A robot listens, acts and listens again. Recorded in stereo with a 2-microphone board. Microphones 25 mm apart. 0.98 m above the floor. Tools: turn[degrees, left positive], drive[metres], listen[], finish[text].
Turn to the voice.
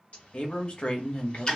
Thought: The man speaking: about 50° left or 130° left.
Action: turn[50]
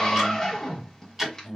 Thought: So it is at 65° left.
Action: turn[65]
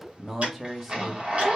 Thought: The man speaking is now 10° right.
Action: turn[-10]
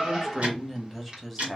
Action: finish[Found it: a man speaking, straight ahead, 1 to 2 m away.]